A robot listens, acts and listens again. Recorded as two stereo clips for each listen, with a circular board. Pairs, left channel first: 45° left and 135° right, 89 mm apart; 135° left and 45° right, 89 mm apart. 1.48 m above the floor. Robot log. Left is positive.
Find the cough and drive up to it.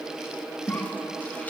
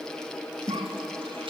note: The cough: 30° right.
cmd yaw -30
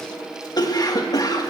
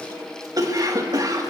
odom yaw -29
cmd fwd 1.0
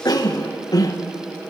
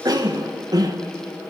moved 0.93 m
cmd fwd 1.0
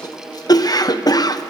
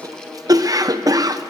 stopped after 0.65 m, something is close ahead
end: I am next to the cough.